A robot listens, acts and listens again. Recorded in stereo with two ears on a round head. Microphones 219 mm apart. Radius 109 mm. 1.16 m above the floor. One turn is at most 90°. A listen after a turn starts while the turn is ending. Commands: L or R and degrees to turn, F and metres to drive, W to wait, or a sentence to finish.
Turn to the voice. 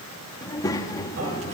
L30
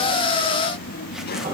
L90
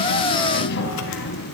L45
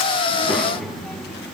Facing the child speaking, 1 to 2 m away.